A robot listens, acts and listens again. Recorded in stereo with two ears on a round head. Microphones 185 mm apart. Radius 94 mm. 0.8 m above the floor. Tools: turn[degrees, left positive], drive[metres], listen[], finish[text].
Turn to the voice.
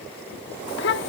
Thought: The child speaking: about 55° left or 125° left.
Action: turn[55]
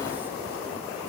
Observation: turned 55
Action: listen[]
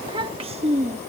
Thought: So it is at 35° right.
Action: turn[-35]
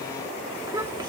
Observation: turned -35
Thought: The child speaking is now 20° right.
Action: turn[-20]
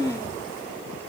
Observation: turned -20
Thought: The child speaking is now 15° right.
Action: turn[-15]
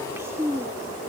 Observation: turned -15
Thought: The child speaking is now 15° right.
Action: turn[-15]
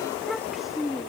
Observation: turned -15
Action: finish[Facing the child speaking.]